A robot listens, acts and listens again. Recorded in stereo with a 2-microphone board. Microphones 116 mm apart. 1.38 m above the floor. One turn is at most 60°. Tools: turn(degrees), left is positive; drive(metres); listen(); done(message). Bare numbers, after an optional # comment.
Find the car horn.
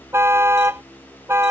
# The car horn: about 20° right or 160° right.
turn(-20)
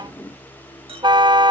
# So it is at 140° right.
turn(-60)
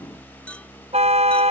# The car horn is now 75° right.
turn(-60)
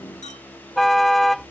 done("Found it: a car horn, straight ahead.")